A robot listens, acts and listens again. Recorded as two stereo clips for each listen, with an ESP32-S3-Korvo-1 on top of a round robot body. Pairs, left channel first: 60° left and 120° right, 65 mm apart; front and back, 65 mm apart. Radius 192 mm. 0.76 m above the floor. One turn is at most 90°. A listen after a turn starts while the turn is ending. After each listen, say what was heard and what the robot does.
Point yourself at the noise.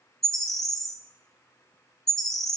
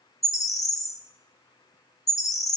The bird: 25° right. Turn 25° right.
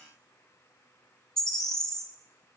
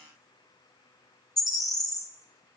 The bird is now 20° right. Turn 20° right.
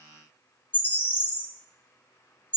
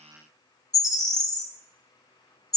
Facing the bird, 1 to 2 m away.